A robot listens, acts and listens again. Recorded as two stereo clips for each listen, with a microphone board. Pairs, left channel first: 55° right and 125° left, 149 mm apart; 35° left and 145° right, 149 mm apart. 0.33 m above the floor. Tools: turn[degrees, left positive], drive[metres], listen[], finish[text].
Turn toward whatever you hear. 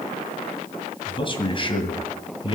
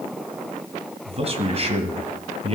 Thought: The man speaking: 105° right.
Action: turn[-105]
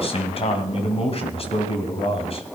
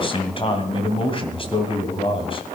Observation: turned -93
Thought: The man speaking is now 15° right.
Action: turn[-15]
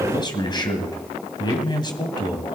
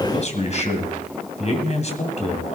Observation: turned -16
Action: finish[Found it: a man speaking, straight ahead.]